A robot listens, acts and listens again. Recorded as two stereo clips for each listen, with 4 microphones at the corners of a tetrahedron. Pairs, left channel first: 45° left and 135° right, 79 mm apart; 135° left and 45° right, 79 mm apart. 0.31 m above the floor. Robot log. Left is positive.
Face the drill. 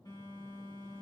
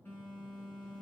cmd idle
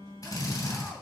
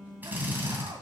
note: The drill: 20° left.
cmd yaw +20
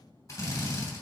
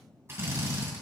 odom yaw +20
end: Facing the drill, 2 to 4 m away.